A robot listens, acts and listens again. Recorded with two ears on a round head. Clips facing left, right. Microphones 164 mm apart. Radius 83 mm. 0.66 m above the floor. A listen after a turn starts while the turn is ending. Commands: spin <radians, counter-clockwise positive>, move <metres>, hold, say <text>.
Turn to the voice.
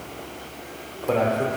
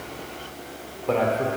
spin 0.52
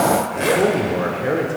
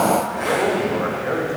spin 2.62
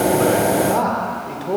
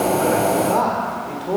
say Facing the man speaking, 2 to 4 m away.